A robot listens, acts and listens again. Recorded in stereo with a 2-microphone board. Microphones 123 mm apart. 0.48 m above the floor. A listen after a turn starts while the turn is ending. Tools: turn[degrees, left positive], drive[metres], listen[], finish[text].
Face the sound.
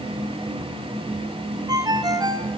Thought: The ringtone: about 30° right or 150° right.
Action: turn[-30]
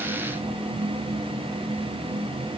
Action: listen[]
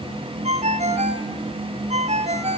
Thought: So it is at 120° right.
Action: turn[-120]
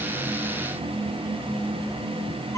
Action: listen[]
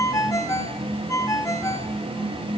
Thought: The ringtone is now 25° left.
Action: turn[25]
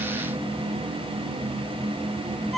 Action: finish[Found it: a ringtone, straight ahead, 2 to 4 m away.]